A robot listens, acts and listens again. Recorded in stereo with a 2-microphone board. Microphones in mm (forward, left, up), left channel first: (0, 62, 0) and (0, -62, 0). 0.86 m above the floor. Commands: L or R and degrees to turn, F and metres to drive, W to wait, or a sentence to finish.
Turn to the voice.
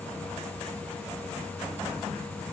W
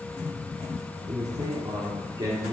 R40
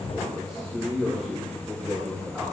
R15
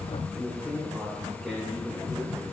Found it: a man speaking, straight ahead, 2 to 4 m away.